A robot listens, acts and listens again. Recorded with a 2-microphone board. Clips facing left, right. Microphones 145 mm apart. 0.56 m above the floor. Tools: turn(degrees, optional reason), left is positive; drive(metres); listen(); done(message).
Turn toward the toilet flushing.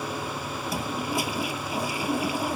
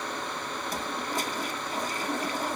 turn(degrees=30)
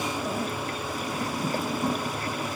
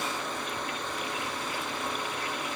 turn(degrees=140, reason="So it is at 140° left.")
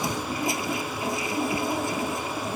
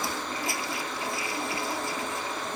turn(degrees=20, reason="The toilet flushing is now 20° left.")
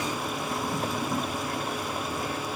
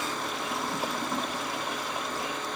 done("Found it: a toilet flushing, straight ahead.")